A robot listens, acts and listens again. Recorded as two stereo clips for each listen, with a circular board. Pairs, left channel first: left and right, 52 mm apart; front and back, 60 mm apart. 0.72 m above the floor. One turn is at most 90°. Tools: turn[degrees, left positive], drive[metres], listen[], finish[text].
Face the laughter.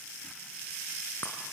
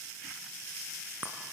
Action: listen[]
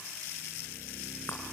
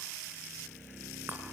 Action: listen[]
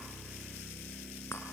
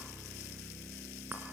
Action: finish[I can't make out laughter to turn to.]